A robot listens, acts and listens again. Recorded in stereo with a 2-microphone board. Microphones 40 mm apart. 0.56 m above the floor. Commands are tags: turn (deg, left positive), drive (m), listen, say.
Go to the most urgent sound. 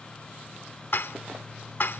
<listen/>
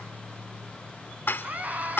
<turn deg="-40"/>
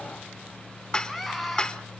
<drive m="1.0"/>
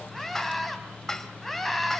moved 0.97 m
<drive m="1.0"/>
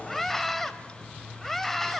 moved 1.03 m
<drive m="1.0"/>
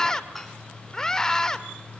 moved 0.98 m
<turn deg="15"/>
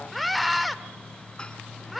<drive m="1.0"/>
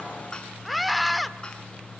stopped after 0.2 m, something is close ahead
<say>Arrived at the scream, straight ahead.</say>